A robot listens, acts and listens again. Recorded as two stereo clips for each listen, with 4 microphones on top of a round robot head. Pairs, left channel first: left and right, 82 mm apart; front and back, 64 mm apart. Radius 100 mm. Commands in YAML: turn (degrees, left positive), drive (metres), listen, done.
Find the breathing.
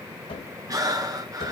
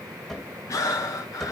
turn: -45
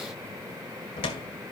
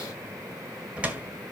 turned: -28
turn: -15
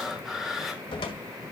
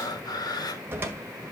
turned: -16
done: "Found it: breathing, straight ahead, 2 to 4 m away."